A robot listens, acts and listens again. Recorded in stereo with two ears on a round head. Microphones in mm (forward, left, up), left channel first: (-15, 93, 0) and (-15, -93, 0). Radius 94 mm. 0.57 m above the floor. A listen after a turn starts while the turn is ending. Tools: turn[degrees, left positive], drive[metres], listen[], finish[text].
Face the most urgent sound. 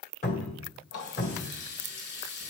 Action: listen[]
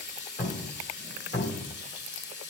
Action: listen[]
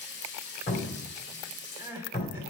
Action: turn[-30]
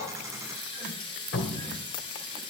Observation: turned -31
Action: listen[]
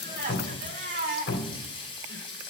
Thought: So it is at 135° right.
Action: turn[-135]
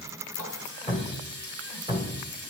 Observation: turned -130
Action: listen[]
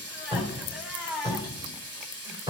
Action: finish[Facing the crying.]